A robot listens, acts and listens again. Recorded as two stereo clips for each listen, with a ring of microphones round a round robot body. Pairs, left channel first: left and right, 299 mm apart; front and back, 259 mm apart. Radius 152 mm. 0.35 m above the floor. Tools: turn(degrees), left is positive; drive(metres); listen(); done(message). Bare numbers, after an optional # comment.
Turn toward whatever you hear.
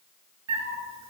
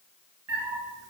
# The cat meowing: 125° right.
turn(-125)
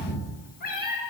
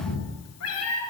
# The cat meowing is now 30° left.
turn(30)
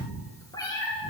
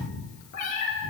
# The cat meowing is now 15° left.
turn(15)
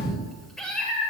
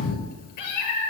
done("Facing the cat meowing.")